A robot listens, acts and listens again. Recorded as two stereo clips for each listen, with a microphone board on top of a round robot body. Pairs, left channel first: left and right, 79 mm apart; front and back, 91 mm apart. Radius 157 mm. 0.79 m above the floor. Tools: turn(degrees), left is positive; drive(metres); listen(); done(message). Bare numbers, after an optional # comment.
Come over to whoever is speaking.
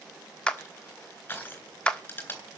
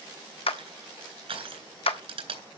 listen()
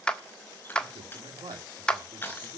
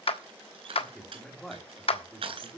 # The man speaking: 90° right.
turn(-90)
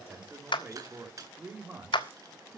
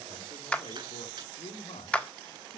# The man speaking is now 20° right.
turn(-20)
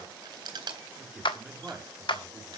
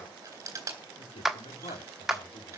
# The man speaking is now 10° right.
turn(-10)
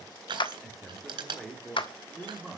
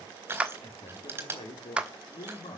drive(1.0)
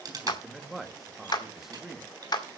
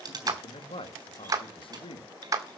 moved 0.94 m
drive(1.0)
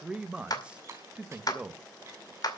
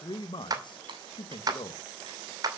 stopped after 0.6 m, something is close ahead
# The man speaking is now 15° right.
turn(-15)
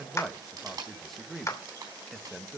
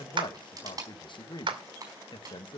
done("I am next to the man speaking.")